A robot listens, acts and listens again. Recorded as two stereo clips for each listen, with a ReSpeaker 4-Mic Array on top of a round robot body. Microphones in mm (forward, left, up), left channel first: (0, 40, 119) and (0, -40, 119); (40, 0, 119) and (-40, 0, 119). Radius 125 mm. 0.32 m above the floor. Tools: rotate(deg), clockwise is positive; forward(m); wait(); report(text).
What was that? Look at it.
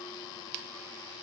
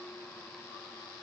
wait()
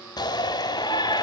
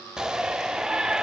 rotate(-100)
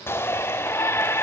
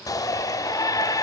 rotate(-35)
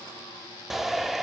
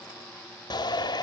report("Facing the shout.")